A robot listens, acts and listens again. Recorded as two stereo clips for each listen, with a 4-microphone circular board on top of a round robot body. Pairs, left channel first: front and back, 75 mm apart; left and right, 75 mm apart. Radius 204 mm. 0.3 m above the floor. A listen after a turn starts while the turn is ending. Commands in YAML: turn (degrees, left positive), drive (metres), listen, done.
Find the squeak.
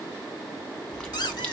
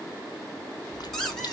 done: "Found it: a squeak, straight ahead."